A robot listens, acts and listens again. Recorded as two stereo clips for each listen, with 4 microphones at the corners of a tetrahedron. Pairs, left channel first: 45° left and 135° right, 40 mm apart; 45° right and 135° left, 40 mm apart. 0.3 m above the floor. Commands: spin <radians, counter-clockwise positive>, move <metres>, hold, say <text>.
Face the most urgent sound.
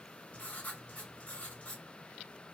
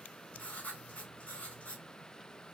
hold
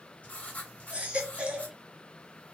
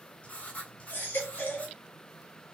spin -1.40
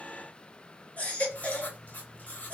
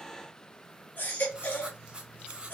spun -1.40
say Found it: a baby crying, straight ahead, 1 to 2 m away.